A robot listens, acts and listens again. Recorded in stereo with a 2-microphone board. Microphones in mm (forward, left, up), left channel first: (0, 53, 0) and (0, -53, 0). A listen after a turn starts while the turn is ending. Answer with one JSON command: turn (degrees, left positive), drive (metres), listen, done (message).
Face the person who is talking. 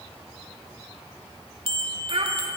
{"turn": -60}
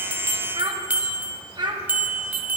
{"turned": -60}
{"turn": -50}
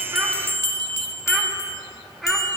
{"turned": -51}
{"done": "Found it: a child speaking, straight ahead, 1 to 2 m away."}